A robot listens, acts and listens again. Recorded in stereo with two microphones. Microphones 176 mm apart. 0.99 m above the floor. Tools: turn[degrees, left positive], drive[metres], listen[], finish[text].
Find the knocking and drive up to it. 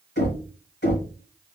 Action: turn[90]
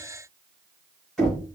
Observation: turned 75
Action: drive[1.0]
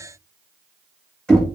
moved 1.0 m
Action: drive[1.0]
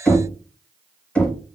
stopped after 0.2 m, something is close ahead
Action: finish[I am next to the knocking.]